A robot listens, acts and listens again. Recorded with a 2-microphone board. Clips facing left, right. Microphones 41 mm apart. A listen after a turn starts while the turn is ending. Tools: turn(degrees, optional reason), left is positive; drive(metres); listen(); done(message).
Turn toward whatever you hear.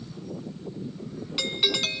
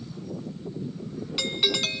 turn(degrees=30)
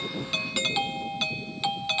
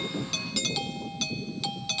turn(degrees=150, reason="So it is at 150° left.")
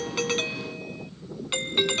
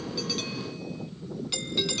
turn(degrees=40, reason="The doorbell is now 40° left.")
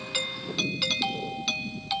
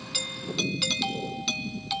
turn(degrees=10, reason="The doorbell is now 10° left.")
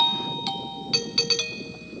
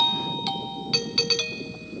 done("Found it: a doorbell, straight ahead.")